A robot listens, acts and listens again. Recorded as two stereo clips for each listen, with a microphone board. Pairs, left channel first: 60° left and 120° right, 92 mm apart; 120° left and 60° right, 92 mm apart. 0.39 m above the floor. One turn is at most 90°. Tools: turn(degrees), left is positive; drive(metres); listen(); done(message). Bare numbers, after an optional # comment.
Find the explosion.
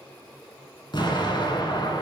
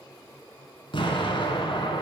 # The explosion: 95° left.
turn(90)
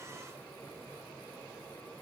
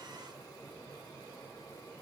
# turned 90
done("I heard an explosion from this way, but can't make it out now.")